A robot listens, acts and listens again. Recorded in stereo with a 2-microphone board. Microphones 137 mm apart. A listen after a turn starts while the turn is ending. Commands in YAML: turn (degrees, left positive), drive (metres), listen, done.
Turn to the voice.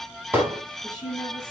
turn: 30
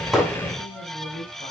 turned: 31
turn: 115
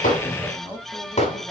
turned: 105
turn: 10
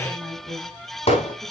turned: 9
done: "Found it: a woman speaking, straight ahead."